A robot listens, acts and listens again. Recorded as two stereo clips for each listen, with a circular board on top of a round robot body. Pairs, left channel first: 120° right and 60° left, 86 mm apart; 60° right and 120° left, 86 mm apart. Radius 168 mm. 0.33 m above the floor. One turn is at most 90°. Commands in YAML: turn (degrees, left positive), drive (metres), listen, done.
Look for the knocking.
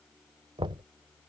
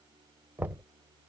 turn: 55
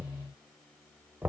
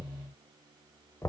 turn: -10
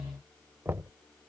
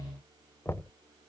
done: "Facing the knocking."